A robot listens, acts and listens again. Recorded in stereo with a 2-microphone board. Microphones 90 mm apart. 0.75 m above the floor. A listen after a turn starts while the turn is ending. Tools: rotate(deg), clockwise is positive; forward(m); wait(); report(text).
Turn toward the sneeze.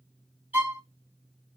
wait()
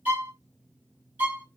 wait()
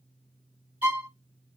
report("I can't make out a sneeze to turn to.")